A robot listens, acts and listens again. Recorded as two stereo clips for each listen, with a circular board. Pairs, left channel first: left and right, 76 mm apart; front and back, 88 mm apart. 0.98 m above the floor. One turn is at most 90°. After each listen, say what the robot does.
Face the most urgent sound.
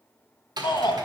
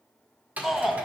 Turn 90° left.
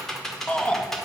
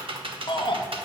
Turn 15° left.
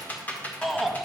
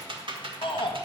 Facing the shout.